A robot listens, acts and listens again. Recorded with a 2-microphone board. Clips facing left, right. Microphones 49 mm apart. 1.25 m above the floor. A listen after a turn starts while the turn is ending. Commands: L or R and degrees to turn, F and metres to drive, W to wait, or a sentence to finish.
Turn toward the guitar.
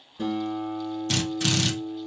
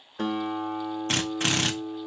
R75
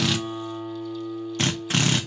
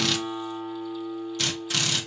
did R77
Facing the guitar.